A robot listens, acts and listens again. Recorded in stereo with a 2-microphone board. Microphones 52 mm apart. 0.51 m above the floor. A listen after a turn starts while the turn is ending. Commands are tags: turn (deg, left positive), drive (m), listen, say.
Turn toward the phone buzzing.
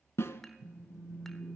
<turn deg="55"/>
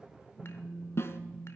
<say>Found it: a phone buzzing, straight ahead, 2 to 4 m away.</say>